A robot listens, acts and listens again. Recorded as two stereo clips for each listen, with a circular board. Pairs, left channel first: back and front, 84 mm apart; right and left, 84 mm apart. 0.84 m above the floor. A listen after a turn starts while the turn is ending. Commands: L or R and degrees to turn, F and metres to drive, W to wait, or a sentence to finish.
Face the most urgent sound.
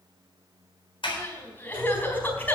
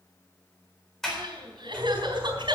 L115
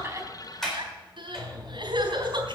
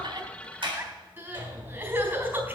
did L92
L25
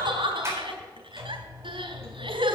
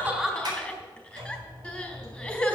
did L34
R10
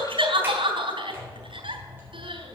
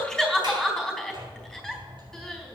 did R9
Facing the crying.